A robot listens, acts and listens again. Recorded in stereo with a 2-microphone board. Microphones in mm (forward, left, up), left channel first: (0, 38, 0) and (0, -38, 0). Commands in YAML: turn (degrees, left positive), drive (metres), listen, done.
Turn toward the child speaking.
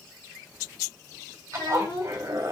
turn: 90
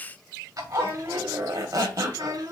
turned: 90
turn: -60
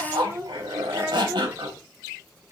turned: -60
turn: -35
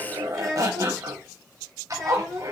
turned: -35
done: "Found it: a child speaking, straight ahead, 1 to 2 m away."